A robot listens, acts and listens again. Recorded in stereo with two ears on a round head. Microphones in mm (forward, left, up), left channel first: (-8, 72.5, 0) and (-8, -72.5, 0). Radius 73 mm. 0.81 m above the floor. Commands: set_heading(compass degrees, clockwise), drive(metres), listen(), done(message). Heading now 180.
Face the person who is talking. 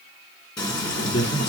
set_heading(115)
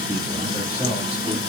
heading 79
set_heading(94)
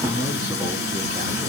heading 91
listen()
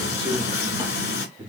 set_heading(126)
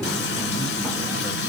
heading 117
listen()
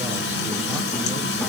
listen()
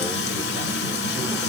done("I heard a man speaking from this way, but can't make it out now.")